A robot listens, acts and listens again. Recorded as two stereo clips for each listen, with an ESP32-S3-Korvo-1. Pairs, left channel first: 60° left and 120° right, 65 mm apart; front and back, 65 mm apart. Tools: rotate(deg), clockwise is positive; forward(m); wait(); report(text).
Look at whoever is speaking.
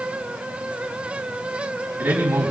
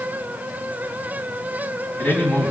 rotate(60)
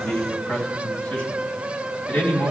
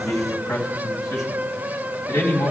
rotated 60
report("Facing the man speaking, 2 to 4 m away.")